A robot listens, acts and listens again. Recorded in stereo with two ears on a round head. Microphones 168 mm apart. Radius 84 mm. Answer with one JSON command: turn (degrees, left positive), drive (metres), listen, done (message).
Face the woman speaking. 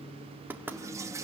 {"listen": true}
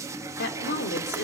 {"turn": 55}
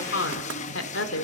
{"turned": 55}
{"turn": 75}
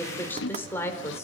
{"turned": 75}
{"turn": 15}
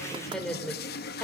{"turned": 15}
{"done": "Facing the woman speaking."}